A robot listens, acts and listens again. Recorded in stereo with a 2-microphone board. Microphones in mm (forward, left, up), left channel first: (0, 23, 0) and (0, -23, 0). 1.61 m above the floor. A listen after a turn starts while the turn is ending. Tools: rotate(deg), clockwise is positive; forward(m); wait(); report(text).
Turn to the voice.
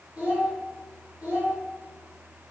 rotate(35)
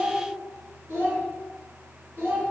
rotate(105)
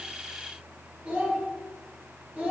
rotate(35)
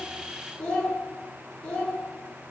rotate(-15)
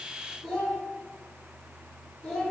report("Found it: a child speaking, straight ahead.")